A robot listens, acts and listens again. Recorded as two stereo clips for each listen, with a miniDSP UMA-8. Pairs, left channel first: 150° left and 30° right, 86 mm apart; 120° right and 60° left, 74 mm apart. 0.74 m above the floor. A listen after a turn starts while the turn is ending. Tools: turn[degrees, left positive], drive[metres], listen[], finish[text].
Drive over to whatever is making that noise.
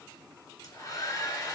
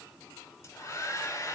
Thought: The hair dryer: 165° right.
Action: turn[-165]
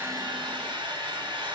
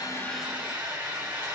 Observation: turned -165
Thought: The hair dryer is now 10° right.
Action: turn[-10]
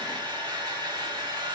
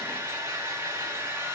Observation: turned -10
Action: drive[1.0]
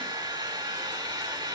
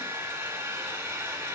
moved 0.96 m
Action: drive[1.0]
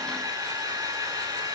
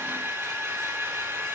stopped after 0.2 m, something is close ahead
Thought: The hair dryer is now 10° left.
Action: turn[10]
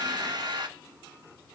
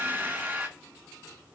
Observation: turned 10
Action: finish[Arrived at the hair dryer, straight ahead.]